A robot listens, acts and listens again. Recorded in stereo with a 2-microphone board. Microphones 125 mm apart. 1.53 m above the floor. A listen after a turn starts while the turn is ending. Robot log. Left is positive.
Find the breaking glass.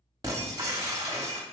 note: The breaking glass: about 30° right or 150° right.
cmd yaw -30
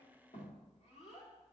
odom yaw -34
cmd idle
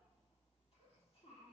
end: I heard breaking glass, but can't make it out now. It was about 5° left or 115° right.